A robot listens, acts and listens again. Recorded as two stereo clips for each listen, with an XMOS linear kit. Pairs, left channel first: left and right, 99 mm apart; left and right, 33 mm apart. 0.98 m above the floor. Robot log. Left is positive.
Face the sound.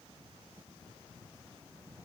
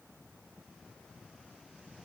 cmd idle
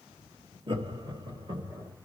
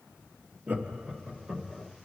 note: The laughter: about 40° right or 140° right.
cmd yaw -40
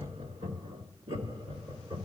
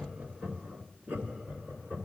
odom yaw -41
note: So it is at 120° right.
cmd yaw -120
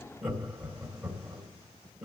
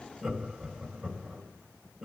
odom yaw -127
end: Facing the laughter.